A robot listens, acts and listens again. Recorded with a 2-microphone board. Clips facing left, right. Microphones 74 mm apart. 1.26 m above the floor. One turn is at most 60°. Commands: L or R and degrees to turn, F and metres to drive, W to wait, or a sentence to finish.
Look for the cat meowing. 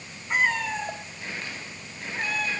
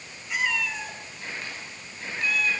L40
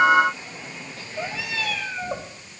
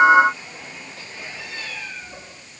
L60
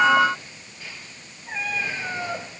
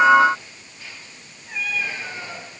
L35
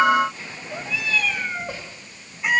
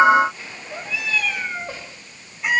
Found it: a cat meowing, straight ahead.